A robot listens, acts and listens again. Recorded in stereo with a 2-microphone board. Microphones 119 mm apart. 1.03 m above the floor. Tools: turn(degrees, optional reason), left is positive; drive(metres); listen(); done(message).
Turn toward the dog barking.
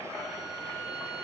listen()
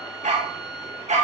turn(degrees=-90)
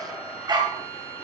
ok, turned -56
turn(degrees=-35, reason="So it is at 35° right.")
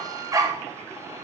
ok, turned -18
turn(degrees=-30, reason="The dog barking is now 30° right.")
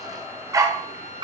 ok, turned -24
turn(degrees=-40, reason="The dog barking is now 40° right.")
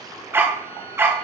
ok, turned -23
turn(degrees=-20, reason="The dog barking is now 20° right.")
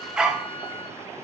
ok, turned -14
done("Facing the dog barking.")